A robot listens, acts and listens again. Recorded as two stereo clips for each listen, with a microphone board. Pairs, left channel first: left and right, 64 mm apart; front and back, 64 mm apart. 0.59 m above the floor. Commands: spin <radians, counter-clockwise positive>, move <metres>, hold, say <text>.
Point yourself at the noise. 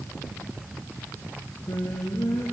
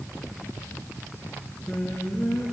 spin 1.40
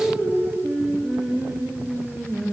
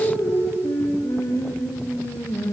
say Facing the singing, over 4 m away.